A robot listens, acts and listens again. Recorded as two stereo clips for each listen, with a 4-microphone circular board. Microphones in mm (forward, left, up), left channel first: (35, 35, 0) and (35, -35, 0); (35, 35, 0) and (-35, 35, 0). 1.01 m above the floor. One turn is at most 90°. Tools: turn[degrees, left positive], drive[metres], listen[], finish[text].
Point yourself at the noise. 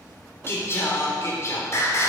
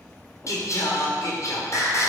Thought: The singing: 45° left.
Action: turn[45]
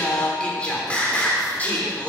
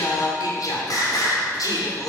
Thought: The singing is now 25° left.
Action: turn[25]
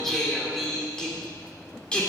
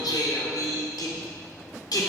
Thought: The singing is now 15° left.
Action: turn[15]
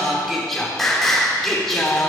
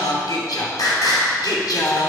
Action: finish[Found it: singing, straight ahead, 2 to 4 m away.]